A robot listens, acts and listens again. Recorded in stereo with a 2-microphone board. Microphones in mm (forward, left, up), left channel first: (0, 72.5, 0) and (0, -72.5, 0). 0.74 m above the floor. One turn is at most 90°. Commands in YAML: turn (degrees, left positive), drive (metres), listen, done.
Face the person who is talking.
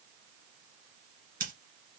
listen: true
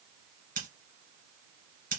listen: true
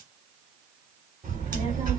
turn: -65
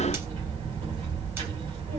turn: -45
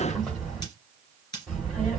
done: "Facing the child speaking."